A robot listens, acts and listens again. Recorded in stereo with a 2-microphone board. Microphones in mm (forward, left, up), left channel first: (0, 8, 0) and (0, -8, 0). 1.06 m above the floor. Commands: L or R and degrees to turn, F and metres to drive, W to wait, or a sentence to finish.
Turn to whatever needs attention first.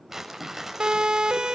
R90
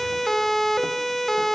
Found it: a siren, straight ahead.